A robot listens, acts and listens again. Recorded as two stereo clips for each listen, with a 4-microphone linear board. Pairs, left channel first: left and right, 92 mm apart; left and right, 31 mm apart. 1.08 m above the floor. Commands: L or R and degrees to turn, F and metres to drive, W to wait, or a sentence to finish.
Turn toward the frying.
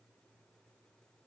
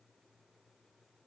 W
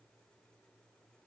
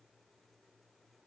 W
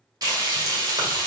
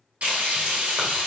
R45
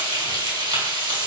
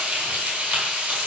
R85
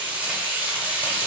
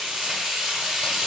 R20
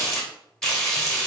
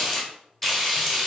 Facing the frying.